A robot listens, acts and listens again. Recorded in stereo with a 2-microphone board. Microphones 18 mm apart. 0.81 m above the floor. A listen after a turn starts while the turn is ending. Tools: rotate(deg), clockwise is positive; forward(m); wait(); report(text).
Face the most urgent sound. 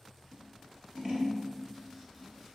wait()
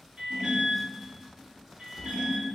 rotate(70)
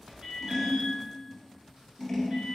wait()
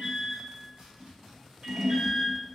rotate(40)
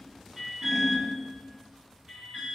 rotate(25)
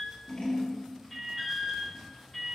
report("Found it: an alarm, straight ahead, 1 to 2 m away.")